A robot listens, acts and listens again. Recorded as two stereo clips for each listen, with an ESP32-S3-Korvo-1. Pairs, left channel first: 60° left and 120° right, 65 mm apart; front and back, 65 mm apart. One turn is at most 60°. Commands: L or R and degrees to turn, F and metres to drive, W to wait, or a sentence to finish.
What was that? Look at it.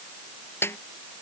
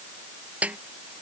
L60
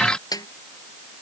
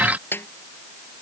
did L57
L55
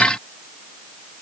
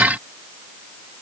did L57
W
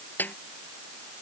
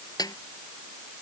Facing the snare drum.